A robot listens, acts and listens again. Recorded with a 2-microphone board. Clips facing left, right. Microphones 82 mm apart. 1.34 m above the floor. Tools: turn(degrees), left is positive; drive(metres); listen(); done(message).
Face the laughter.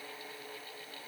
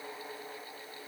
listen()
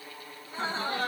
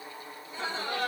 turn(degrees=45)
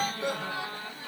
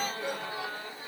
turn(degrees=90)
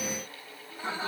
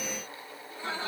turn(degrees=15)
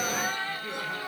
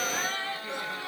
done("Facing the laughter.")